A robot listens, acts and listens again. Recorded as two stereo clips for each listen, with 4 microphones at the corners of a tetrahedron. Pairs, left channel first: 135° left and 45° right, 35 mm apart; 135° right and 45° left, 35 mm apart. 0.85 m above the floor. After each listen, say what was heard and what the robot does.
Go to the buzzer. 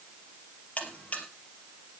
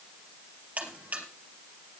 The buzzer: 90° left. Turn 90° left.
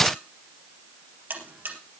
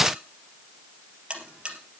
The buzzer is now 20° right. Turn 20° right.
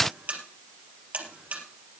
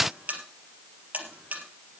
Drive 1.0 m forward.
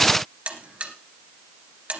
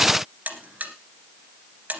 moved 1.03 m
Drive 1.0 m forward.
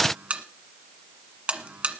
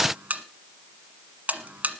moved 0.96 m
Drive 1.0 m forward.
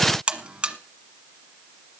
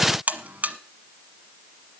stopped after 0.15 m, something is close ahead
I am next to the buzzer.